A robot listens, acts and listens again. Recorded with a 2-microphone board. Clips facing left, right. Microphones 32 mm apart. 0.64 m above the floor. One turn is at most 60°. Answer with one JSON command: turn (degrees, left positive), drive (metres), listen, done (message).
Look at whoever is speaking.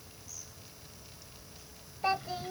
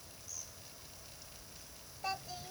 {"turn": 35}
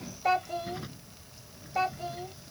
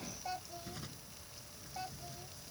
{"turn": 60}
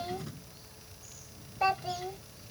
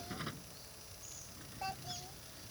{"turn": 55}
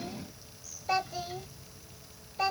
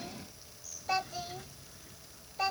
{"done": "Found it: a child speaking, straight ahead."}